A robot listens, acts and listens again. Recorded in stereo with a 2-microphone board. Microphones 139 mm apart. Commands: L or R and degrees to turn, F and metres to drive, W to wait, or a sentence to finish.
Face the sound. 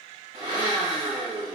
R45
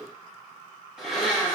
Found it: a blender, straight ahead, 1 to 2 m away.